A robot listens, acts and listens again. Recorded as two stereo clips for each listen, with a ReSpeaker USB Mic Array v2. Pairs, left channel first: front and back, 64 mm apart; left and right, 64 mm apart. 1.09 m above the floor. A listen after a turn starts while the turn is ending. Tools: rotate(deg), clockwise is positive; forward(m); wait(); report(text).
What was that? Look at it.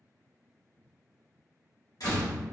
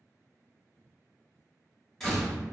report("Facing the door slam.")